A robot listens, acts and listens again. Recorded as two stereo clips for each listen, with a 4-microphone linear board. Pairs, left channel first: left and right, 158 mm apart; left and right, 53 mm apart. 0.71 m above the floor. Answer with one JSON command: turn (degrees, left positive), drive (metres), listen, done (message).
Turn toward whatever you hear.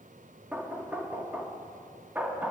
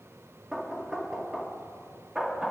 {"turn": -30}
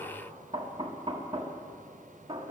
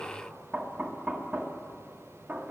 {"turn": -140}
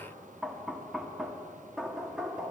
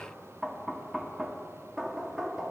{"done": "Facing the knocking."}